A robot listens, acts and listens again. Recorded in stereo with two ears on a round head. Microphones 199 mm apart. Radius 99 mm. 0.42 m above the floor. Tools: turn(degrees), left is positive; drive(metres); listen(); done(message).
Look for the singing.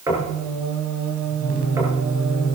turn(degrees=-65)
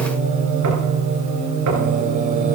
turn(degrees=-40)
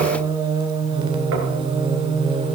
turn(degrees=-25)
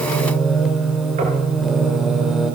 done("Found it: singing, straight ahead, 1 to 2 m away.")